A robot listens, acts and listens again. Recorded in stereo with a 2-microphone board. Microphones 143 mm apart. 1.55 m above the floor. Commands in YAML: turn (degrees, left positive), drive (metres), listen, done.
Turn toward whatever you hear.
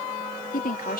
turn: 90
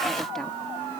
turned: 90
listen: true
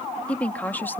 turn: 15
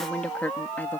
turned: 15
turn: 10
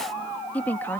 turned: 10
turn: 15
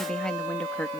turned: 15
turn: 10
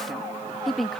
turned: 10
done: "Found it: a woman speaking, straight ahead."